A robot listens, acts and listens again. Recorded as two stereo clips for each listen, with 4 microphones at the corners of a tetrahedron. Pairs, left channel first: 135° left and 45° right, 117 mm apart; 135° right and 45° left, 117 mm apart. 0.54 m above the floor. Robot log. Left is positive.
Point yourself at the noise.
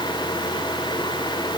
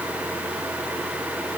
cmd idle
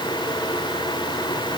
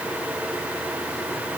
cmd idle
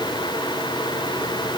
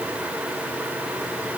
end: I can't make out anything to turn to.